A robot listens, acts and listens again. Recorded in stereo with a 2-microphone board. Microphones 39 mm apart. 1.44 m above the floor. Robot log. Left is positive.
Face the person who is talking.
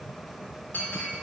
cmd idle
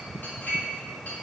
cmd idle
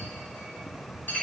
end: I can't make out anyone speaking to turn to.